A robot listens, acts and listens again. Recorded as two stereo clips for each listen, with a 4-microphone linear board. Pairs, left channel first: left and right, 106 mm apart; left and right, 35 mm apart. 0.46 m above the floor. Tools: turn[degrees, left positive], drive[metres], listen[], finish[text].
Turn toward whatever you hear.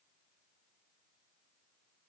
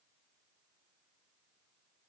Action: listen[]
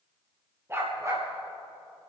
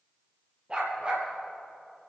Thought: The dog barking: about 25° right or 155° right.
Action: turn[-25]
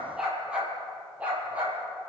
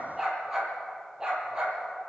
Thought: The dog barking: about 15° right or 165° right.
Action: turn[-15]
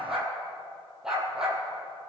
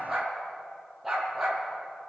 Action: finish[Facing the dog barking.]